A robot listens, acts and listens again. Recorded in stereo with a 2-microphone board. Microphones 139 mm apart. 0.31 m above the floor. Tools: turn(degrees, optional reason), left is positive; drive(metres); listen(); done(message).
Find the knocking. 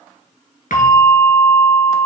listen()
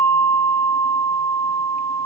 listen()
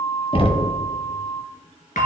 turn(degrees=45, reason="The knocking: about 45° left or 135° left.")
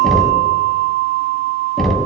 done("Found it: knocking, straight ahead, 1 to 2 m away.")